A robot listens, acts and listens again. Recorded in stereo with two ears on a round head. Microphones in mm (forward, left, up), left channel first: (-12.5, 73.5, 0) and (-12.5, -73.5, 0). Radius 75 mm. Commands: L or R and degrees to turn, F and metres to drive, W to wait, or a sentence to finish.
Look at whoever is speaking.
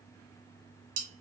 W
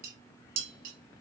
W
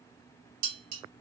I can't make out anyone speaking, only dishes clattering.